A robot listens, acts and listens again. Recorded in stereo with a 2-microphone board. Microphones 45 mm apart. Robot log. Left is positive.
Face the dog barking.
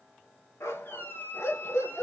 cmd yaw +90
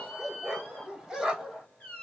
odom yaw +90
end: Facing the dog barking.